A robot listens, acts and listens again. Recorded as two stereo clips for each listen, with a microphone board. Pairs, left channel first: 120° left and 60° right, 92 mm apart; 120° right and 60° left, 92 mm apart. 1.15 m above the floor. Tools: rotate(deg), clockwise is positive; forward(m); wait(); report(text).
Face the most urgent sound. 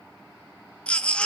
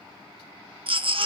rotate(-40)
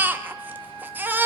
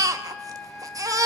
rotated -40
rotate(-10)
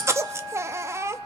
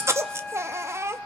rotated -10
report("Facing the baby crying.")